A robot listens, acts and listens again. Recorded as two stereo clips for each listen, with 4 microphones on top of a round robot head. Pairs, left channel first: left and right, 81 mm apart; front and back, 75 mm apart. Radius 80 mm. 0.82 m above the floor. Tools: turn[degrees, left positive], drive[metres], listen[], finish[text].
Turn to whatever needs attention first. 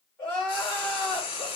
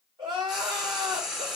Thought: The crying: 160° left.
Action: turn[160]
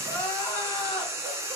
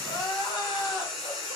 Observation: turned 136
Thought: The crying is now 20° left.
Action: turn[20]
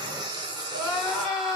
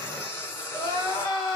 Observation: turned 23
Action: finish[Facing the crying, 2 to 4 m away.]